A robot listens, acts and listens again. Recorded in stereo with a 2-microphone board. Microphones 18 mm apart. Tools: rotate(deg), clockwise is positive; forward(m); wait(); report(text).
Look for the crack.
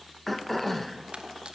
rotate(65)
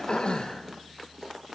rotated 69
wait()
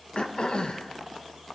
report("I heard a crack, but can't make it out now. It was about 5° left or 45° right.")